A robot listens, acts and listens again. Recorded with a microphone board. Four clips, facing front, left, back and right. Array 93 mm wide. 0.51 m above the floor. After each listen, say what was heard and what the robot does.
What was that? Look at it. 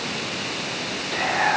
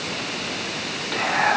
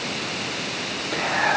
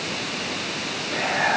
The whispering: 100° left. Turn 100° left.
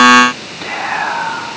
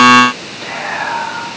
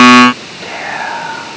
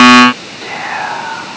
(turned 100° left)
Facing the whispering, over 4 m away.